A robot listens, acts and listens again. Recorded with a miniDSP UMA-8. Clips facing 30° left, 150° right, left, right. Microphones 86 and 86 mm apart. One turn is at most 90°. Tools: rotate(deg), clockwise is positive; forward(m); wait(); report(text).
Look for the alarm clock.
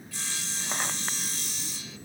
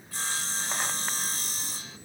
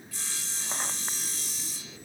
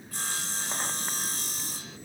wait()
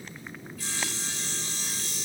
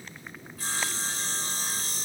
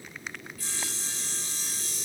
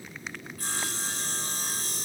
wait()
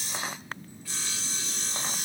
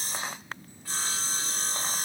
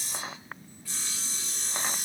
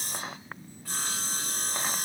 report("I can't make out an alarm clock, only sawing.")